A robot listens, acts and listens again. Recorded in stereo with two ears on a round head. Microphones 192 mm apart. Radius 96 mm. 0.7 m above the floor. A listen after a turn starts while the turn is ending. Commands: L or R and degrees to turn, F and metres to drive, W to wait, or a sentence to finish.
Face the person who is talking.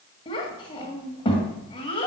L25
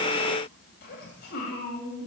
L130
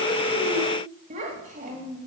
R35
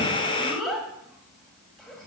Facing the child speaking, 2 to 4 m away.